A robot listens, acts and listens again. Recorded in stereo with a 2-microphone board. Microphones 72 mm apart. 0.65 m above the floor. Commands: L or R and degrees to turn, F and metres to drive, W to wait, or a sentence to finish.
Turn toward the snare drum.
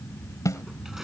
L50
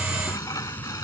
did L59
R10
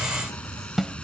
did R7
Found it: a snare drum, straight ahead.